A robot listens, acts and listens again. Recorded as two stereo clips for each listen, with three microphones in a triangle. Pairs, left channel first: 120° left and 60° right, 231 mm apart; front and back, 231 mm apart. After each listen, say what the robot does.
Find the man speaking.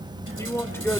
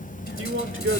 Turn 160° right.
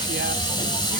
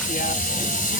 Keep listening.
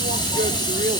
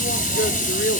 Keep listening.
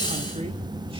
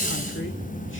I heard a man speaking from this way, but can't make it out now.